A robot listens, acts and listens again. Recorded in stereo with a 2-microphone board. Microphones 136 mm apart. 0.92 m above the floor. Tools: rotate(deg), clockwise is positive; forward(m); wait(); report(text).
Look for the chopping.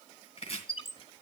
rotate(-45)
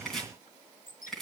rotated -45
report("Facing the chopping, 2 to 4 m away.")